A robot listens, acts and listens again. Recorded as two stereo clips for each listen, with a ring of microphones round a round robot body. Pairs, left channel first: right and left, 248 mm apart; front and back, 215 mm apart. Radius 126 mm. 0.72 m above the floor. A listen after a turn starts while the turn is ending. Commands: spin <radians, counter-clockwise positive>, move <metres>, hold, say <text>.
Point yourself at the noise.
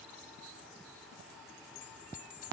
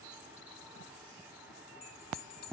spin -0.52
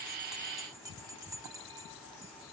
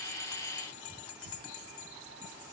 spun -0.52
spin 0.26
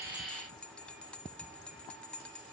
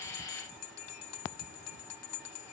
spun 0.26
say Found it: a bell, straight ahead, 1 to 2 m away.